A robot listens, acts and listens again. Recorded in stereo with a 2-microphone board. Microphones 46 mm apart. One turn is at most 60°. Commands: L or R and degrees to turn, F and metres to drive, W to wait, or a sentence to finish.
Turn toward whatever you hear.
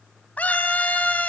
L35
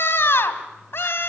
L60
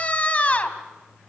L35
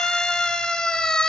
L20
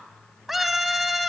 Facing the scream.